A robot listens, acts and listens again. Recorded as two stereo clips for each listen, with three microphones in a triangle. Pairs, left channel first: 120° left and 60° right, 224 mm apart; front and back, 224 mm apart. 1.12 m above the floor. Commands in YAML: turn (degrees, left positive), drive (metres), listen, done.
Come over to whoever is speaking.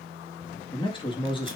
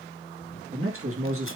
turn: -175
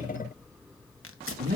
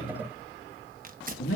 turn: -10
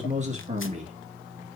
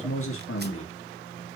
drive: 1.0
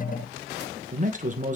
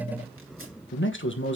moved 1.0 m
turn: -10
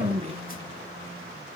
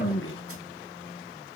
drive: 1.0
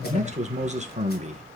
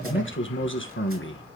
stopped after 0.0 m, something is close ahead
done: "I am next to the man speaking."